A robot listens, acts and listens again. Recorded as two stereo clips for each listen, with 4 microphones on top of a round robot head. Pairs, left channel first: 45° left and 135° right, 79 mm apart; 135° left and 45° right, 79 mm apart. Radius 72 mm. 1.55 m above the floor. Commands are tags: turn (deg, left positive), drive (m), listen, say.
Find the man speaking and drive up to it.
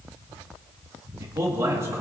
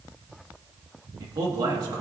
<turn deg="-80"/>
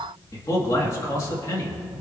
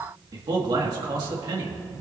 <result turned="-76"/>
<drive m="1.0"/>
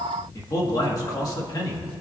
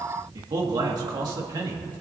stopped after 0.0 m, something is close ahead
<say>Something is in my way. I am facing the man speaking but have not reached it.</say>